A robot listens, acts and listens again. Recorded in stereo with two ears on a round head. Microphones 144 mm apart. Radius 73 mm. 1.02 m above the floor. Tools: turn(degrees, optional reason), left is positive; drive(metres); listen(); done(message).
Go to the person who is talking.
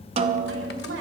turn(degrees=-90)
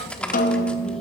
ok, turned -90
listen()
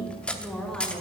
drive(metres=1.0)
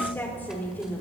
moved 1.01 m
turn(degrees=15, reason="The woman speaking is now 15° left.")
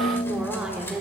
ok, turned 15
drive(metres=1.0)
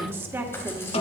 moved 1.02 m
turn(degrees=-15, reason="The woman speaking is now 15° right.")
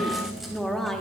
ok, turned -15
drive(metres=1.0)
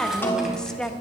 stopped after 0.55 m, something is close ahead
done("I am next to the woman speaking.")